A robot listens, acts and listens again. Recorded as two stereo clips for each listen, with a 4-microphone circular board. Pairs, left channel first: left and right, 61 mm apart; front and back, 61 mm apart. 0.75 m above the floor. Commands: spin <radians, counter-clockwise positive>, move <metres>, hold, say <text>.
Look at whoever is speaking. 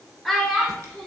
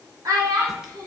spin 3.05
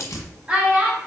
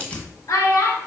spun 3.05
spin -0.35
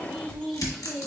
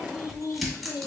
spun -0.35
say Found it: a child speaking, straight ahead.